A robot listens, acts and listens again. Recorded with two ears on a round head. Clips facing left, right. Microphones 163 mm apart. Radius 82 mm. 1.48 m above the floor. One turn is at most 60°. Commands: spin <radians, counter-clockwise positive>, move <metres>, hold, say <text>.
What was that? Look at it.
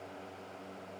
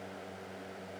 hold
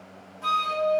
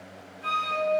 spin 0.87
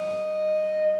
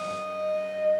say Found it: a flute, straight ahead, 2 to 4 m away.